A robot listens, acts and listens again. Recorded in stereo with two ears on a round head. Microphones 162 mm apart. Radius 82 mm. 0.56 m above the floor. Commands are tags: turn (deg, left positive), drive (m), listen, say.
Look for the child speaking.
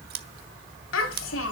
<turn deg="90"/>
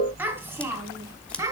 <turn deg="-15"/>
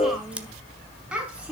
<say>Facing the child speaking.</say>